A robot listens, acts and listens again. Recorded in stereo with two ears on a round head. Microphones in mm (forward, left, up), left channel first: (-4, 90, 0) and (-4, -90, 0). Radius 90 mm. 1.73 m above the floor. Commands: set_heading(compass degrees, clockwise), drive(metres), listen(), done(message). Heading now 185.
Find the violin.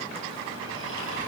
listen()
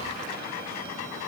listen()
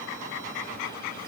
done("I can't make out a violin to turn to.")